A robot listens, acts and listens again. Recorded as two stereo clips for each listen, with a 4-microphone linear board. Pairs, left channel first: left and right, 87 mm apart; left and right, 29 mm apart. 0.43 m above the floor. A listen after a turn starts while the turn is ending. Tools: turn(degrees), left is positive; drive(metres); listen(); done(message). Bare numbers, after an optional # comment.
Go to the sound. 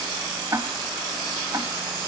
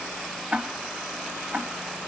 # The ticking: about 45° right or 135° right.
turn(-45)
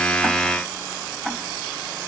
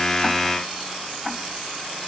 drive(1.0)
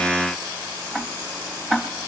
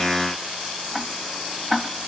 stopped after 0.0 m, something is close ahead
done("Something is in my way. I am facing the ticking but have not reached it.")